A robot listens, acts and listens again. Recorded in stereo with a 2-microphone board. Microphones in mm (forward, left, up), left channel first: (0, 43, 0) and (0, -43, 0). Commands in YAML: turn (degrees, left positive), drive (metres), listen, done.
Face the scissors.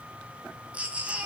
listen: true
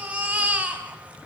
listen: true
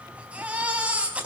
done: "I can't make out scissors, only a baby crying."